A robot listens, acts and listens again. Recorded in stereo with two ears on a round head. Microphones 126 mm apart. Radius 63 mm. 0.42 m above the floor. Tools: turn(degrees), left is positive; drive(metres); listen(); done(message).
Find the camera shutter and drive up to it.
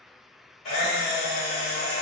turn(degrees=55)
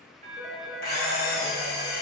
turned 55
turn(degrees=75)
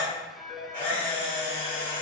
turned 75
turn(degrees=15)
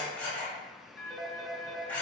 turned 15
turn(degrees=10)
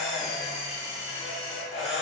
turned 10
drive(metres=1.0)
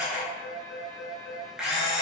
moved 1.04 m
drive(metres=1.0)
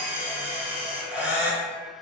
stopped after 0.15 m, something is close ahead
turn(degrees=-10)
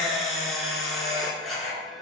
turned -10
done("Arrived at the camera shutter, straight ahead.")